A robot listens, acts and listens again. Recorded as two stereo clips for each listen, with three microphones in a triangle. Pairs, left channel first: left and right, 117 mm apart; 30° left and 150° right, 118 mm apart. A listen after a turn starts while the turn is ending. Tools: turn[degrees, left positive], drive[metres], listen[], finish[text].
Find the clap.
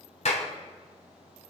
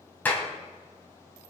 Thought: The clap: 105° left.
Action: turn[105]
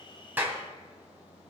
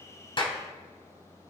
Action: listen[]
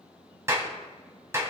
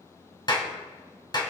Thought: The clap is now 25° right.
Action: turn[-25]
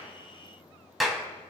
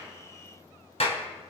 Action: finish[Found it: a clap, straight ahead.]